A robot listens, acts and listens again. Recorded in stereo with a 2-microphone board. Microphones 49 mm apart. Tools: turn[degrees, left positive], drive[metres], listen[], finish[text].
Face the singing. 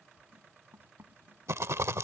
Action: listen[]
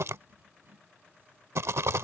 Action: listen[]
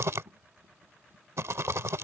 Action: finish[I can't make out singing, only writing and a rattle.]